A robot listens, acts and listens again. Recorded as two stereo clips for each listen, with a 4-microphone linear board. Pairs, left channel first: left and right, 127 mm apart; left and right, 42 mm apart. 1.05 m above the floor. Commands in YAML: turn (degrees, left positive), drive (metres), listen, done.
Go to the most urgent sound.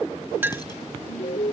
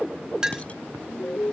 turn: 90
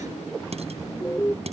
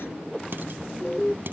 turn: 15
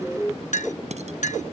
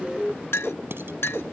drive: 1.0
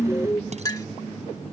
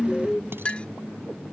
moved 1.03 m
turn: 20
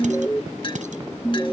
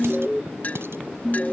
turn: 10
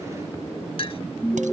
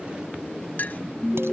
drive: 1.0
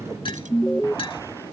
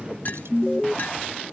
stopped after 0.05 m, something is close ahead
done: "I am next to the alarm."